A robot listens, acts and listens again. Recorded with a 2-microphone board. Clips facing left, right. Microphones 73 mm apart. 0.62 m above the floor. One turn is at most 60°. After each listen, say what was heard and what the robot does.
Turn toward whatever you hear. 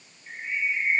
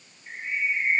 The bird: about 25° right or 155° right. Turn 25° right.
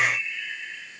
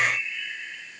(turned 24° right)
Facing the bird.